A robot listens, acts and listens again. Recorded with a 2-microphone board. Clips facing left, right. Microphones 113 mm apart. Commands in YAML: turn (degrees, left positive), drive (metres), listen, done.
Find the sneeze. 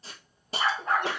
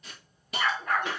turn: 60
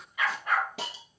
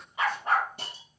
listen: true
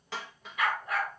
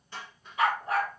done: "I heard a sneeze, but can't make it out now. It was about straight ahead or 60° left."